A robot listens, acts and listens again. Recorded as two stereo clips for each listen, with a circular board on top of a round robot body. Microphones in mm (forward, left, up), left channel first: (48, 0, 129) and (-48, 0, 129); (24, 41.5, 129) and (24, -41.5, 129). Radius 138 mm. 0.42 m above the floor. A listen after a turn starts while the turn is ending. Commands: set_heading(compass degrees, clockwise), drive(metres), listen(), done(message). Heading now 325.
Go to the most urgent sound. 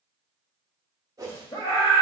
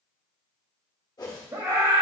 set_heading(5)
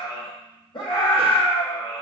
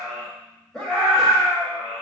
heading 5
drive(1.0)
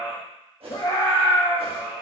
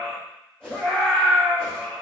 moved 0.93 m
set_heading(355)
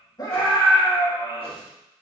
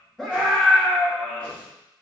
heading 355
drive(1.0)
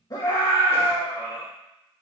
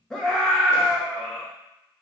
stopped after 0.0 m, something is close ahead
set_heading(345)
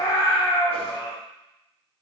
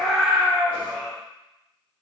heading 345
done("I am next to the scream.")